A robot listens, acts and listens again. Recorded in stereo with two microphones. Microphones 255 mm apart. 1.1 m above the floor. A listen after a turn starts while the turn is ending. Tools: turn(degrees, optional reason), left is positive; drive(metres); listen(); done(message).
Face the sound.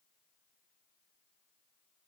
listen()
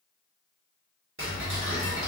turn(degrees=-55, reason="The ticking: about 55° right or 125° right.")
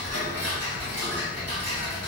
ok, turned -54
turn(degrees=-70, reason="So it is at 70° right.")
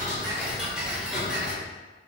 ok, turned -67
done("Facing the ticking.")